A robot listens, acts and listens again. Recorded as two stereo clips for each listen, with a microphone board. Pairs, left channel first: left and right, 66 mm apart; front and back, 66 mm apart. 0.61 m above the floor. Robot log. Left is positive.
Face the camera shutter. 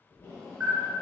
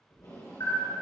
note: The camera shutter: 10° right.
cmd yaw -10
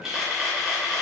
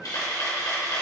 end: Facing the camera shutter.